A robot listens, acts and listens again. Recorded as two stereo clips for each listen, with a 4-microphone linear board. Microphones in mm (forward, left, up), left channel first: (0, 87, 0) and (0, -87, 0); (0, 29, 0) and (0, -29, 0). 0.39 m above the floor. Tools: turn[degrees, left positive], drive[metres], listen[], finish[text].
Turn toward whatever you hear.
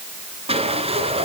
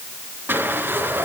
Thought: The sliding door: about 35° right or 145° right.
Action: turn[-35]
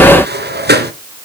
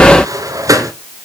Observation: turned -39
Thought: So it is at 105° right.
Action: turn[-105]
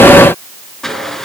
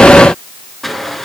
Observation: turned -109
Action: finish[Found it: a sliding door, straight ahead.]